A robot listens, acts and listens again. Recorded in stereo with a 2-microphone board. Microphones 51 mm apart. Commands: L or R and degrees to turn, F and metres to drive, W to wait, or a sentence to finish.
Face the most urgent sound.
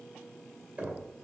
W
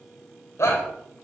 L65
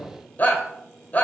L40
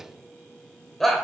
Facing the shout, 1 to 2 m away.